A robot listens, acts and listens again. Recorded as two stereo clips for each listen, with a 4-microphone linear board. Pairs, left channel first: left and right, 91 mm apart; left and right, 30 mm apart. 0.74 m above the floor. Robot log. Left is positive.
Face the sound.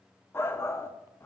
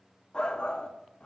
note: The shout: about 25° left or 155° left.
cmd yaw +25
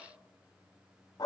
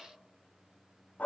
note: So it is at 120° left.
cmd yaw +120
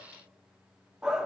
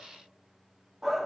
note: The shout is now 10° right.
cmd yaw -10
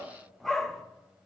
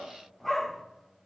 end: Facing the shout.